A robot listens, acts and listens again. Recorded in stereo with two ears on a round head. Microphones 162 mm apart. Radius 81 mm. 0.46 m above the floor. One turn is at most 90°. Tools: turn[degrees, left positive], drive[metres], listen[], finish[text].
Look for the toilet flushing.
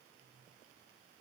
Action: listen[]
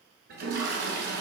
Thought: The toilet flushing: about 65° right or 115° right.
Action: turn[-65]
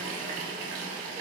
Thought: So it is at 45° right.
Action: turn[-45]
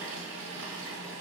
Thought: The toilet flushing is now 10° right.
Action: turn[-10]
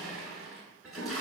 Action: finish[Found it: a toilet flushing, straight ahead, 1 to 2 m away.]